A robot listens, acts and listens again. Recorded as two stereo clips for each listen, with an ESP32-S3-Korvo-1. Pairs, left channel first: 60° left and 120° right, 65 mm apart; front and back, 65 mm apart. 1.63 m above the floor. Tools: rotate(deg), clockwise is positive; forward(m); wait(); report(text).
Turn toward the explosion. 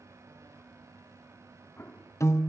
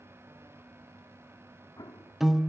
report("Facing the explosion.")